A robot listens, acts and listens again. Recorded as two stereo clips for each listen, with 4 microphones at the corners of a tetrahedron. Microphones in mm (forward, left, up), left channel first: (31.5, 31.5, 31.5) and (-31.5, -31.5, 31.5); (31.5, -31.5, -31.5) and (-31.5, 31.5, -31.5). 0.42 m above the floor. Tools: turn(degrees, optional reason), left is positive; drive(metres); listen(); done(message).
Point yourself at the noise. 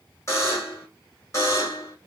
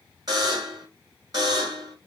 turn(degrees=100, reason="The buzzer: 100° left.")
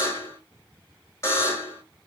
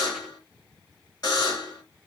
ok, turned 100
turn(degrees=-10, reason="The buzzer is now 10° right.")
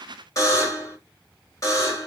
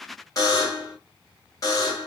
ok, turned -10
done("Facing the buzzer.")